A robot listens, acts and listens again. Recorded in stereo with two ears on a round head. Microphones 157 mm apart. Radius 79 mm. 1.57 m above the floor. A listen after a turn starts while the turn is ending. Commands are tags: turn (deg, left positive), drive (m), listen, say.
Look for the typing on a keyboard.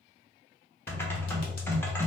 <turn deg="30"/>
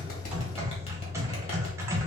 <turn deg="-15"/>
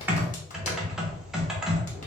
<say>Facing the typing on a keyboard.</say>